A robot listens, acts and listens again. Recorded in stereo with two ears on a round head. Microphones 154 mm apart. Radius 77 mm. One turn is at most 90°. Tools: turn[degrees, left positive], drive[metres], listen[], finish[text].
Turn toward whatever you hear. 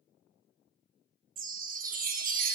Thought: The chime: about 55° right or 125° right.
Action: turn[-55]
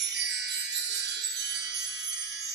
Thought: So it is at 70° right.
Action: turn[-70]
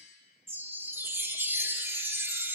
Thought: The chime is now 15° right.
Action: turn[-15]
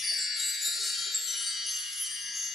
Action: finish[Facing the chime.]